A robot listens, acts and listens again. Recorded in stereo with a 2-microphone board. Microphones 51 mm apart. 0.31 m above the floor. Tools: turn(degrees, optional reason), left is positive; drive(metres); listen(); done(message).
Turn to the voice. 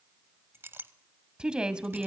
turn(degrees=-15, reason="The woman speaking: about 15° right or 165° right.")
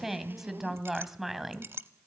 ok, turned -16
done("Facing the woman speaking, 1 to 2 m away.")